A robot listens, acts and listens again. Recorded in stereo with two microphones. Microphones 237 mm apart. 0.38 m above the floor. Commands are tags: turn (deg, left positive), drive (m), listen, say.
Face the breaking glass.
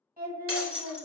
<turn deg="-65"/>
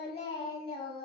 <listen/>
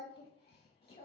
<say>I heard breaking glass, but can't make it out now. It was about straight ahead or 50° right.</say>